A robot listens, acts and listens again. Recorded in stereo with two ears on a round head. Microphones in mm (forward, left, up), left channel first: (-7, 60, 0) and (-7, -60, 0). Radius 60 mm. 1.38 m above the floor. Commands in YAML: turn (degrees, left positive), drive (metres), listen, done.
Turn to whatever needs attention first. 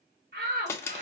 turn: -90
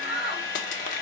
done: "Facing the shout, 2 to 4 m away."